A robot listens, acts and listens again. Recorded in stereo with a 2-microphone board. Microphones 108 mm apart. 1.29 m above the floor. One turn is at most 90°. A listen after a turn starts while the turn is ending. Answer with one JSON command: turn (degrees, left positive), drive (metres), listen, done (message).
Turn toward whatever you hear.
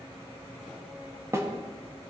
{"turn": -25}
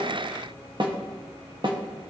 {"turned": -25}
{"turn": -90}
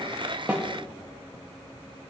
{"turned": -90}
{"turn": -20}
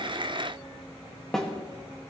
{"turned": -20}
{"done": "Found it: a snare drum, straight ahead, 1 to 2 m away."}